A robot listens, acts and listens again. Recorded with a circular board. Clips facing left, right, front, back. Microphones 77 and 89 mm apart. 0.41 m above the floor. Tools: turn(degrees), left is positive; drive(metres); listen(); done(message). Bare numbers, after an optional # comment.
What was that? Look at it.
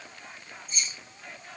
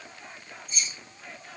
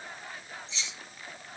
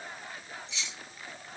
# The keys jangling: 45° left.
turn(45)
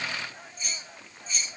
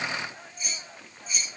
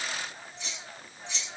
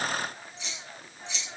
# The keys jangling is now 10° right.
turn(-10)
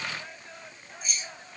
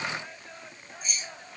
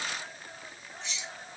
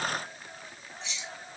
done("Facing the keys jangling.")